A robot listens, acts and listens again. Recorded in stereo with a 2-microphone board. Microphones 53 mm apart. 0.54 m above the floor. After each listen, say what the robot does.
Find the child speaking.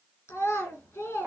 Turn 65° left.
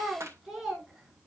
Found it: a child speaking, straight ahead, over 4 m away.